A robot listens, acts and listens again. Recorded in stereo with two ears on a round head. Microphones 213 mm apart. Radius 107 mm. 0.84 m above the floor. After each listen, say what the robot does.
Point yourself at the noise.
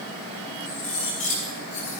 Turn 35° left.
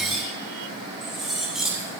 Found it: cutlery clinking, straight ahead, over 4 m away.